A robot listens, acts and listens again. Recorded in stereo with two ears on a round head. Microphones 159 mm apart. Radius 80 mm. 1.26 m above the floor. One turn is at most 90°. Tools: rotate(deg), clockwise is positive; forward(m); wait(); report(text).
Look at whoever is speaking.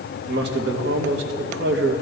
rotate(65)
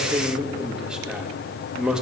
report("Found it: a man speaking, straight ahead, 1 to 2 m away.")